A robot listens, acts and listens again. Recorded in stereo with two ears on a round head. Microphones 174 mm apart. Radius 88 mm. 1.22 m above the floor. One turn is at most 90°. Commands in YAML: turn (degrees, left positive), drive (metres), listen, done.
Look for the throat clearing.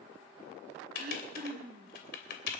turn: -50
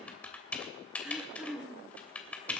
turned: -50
done: "Found it: throat clearing, straight ahead, 2 to 4 m away."